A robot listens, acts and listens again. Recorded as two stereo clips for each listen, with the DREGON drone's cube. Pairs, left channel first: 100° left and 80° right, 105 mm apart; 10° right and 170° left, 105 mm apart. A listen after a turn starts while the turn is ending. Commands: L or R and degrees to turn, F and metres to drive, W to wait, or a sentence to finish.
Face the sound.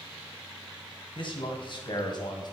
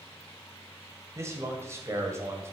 L115
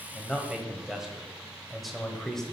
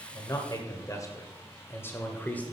L25
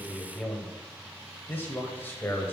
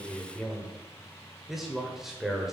L90
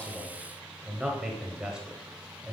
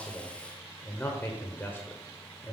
R15
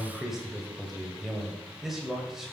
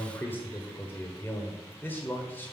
Found it: a man speaking, straight ahead, 1 to 2 m away.